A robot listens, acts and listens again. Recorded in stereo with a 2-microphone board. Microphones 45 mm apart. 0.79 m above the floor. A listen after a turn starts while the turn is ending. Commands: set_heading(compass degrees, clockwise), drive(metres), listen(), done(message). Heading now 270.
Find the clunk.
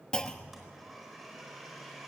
set_heading(255)
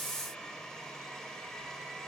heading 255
listen()
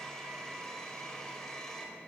done("I heard a clunk, but can't make it out now. It was about straight ahead or 150° left.")